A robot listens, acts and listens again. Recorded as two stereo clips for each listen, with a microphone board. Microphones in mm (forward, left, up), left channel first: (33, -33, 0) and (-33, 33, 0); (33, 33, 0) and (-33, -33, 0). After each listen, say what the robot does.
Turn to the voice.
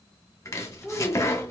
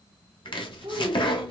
Turn 130° right.
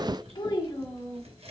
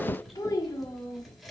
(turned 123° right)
Facing the child speaking, 1 to 2 m away.